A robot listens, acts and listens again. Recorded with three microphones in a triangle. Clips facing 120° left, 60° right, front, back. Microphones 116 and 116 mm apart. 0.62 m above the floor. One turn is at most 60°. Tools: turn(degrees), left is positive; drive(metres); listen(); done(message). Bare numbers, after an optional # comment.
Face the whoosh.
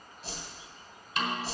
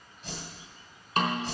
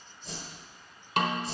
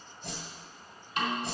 # The whoosh: 175° left.
turn(60)
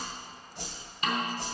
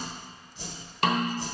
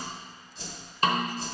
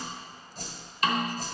# The whoosh is now 135° left.
turn(60)
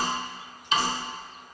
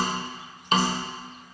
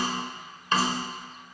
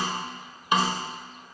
# Nothing new. It was at 75° left.
turn(60)
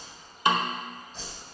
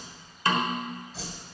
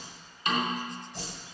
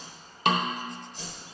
# The whoosh is now 25° left.
turn(25)
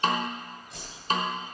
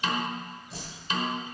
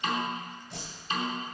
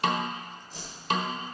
done("Found it: a whoosh, straight ahead, 2 to 4 m away.")